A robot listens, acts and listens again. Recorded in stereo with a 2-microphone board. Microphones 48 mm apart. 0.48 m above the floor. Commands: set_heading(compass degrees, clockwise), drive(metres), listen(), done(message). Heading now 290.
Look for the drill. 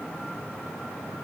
listen()
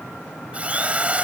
set_heading(320)
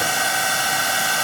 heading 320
done("Facing the drill.")